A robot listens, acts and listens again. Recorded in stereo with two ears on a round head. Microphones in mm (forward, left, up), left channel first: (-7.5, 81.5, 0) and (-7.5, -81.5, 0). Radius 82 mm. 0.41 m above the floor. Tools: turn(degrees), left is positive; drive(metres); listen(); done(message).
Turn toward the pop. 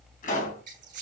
turn(degrees=50)
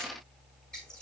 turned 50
listen()
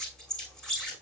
done("I heard a pop, but can't make it out now. It was about straight ahead or 80° left.")